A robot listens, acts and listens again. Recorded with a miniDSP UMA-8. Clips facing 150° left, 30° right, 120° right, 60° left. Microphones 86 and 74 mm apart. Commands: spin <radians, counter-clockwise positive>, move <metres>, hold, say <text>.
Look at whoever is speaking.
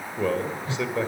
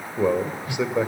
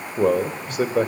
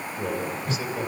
spin -1.75
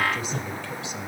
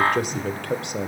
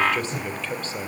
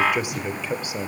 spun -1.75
spin -0.26
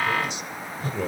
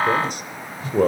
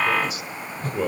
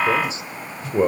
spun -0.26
say Found it: a man speaking, straight ahead.